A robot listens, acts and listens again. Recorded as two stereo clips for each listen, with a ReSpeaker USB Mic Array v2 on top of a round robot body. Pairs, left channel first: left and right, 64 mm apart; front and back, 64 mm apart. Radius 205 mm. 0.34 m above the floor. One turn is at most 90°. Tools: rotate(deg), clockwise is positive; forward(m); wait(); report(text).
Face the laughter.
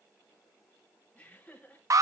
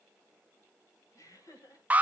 rotate(-20)
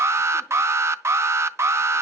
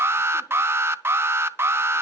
wait()
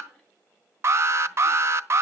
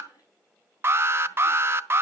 wait()
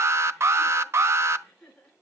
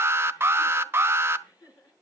report("Facing the laughter, over 4 m away.")